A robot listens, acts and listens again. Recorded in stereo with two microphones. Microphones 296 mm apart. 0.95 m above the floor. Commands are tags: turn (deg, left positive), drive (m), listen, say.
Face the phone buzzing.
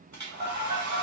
<turn deg="-20"/>
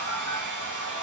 <listen/>
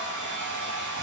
<listen/>
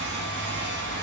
<say>I heard a phone buzzing, but can't make it out now. It was about straight ahead or 140° right.</say>